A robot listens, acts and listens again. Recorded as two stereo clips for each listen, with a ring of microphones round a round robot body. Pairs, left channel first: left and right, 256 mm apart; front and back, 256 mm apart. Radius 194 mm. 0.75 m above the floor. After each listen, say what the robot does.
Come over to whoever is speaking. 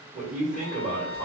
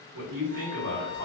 Turn 160° right.
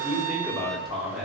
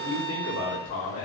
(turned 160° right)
Drive 1.0 m forward.
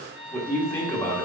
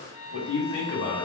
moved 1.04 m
Turn 10° left.
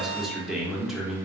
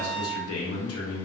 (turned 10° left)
Drive 1.0 m forward.
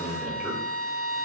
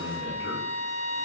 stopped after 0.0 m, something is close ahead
Arrived at the man speaking, straight ahead.